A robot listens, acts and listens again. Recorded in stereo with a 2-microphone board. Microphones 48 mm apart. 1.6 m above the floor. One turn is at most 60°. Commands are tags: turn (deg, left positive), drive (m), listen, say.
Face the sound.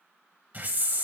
<turn deg="-40"/>
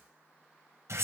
<turn deg="-60"/>
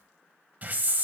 <turn deg="-40"/>
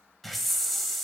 <say>Facing the hiss, 1 to 2 m away.</say>